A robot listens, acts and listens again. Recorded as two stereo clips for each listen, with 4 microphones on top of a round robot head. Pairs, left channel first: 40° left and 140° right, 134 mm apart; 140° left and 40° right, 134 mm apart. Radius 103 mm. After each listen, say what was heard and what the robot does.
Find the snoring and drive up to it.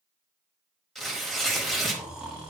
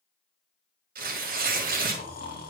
The snoring: 135° left. Turn 135° left.
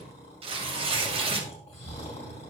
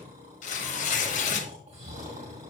Drive 1.0 m forward.
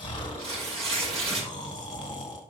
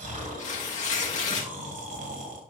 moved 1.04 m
The snoring is now 15° right. Turn 15° right.
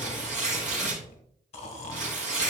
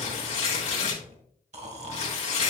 Drive 1.0 m forward.
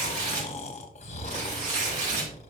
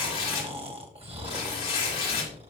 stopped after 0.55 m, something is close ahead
Arrived at the snoring, straight ahead.